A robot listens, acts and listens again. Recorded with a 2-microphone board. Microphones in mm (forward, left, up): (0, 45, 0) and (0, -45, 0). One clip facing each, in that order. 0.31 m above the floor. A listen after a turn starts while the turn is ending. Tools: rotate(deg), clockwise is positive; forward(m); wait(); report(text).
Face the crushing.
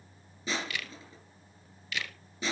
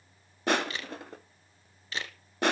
rotate(65)
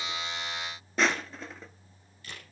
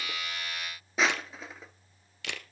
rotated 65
report("Found it: crushing, straight ahead.")